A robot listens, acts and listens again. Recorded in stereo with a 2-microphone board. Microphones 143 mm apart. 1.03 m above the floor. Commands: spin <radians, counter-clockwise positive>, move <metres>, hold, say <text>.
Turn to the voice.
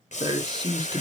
spin -0.52
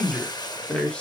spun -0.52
spin 0.17
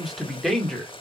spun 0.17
say Found it: a man speaking, straight ahead, 2 to 4 m away.